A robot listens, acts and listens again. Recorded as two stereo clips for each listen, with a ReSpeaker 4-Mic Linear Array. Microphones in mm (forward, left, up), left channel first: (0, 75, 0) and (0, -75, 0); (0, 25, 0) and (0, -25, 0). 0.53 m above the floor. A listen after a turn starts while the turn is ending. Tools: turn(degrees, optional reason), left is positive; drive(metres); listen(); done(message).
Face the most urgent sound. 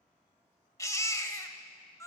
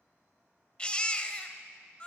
turn(degrees=20, reason="The baby crying: about 20° left or 160° left.")
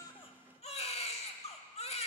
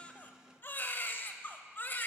turn(degrees=135, reason="So it is at 135° left.")
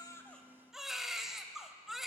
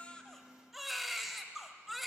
done("Found it: a baby crying, straight ahead.")